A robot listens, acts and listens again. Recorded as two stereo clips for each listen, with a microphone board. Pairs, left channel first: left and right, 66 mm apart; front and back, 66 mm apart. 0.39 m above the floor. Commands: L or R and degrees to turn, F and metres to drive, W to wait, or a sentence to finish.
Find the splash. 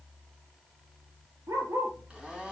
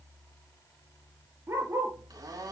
W
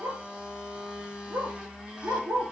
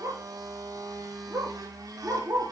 W
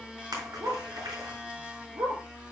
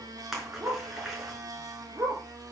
R95
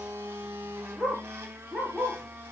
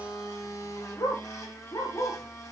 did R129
L35
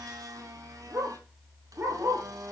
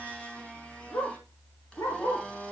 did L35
Facing where the splash came from. I can't hear it now.